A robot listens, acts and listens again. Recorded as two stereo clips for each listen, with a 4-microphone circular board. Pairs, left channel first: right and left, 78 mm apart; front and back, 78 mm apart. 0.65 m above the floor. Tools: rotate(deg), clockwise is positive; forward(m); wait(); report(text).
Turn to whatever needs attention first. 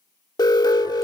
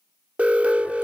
rotate(110)
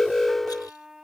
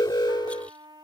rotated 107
report("Facing the alarm.")